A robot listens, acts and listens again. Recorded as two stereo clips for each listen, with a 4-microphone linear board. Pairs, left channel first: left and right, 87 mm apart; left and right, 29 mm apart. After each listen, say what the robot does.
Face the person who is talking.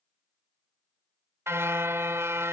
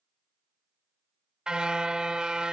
Keep listening.
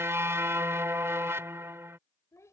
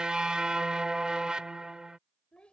Turn 35° left.
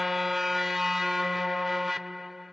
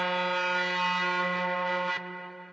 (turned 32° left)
Keep listening.
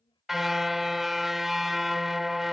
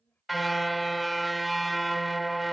Turn 110° left.
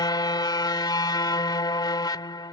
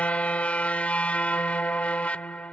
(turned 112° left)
Keep listening.
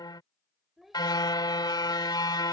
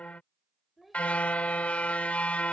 Found it: a child speaking, straight ahead.